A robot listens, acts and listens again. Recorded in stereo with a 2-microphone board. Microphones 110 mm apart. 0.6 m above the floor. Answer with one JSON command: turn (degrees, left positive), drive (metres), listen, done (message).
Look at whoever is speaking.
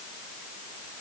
{"listen": true}
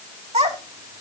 {"turn": -90}
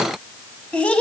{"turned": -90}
{"turn": 10}
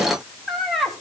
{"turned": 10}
{"done": "Found it: a child speaking, straight ahead, 2 to 4 m away."}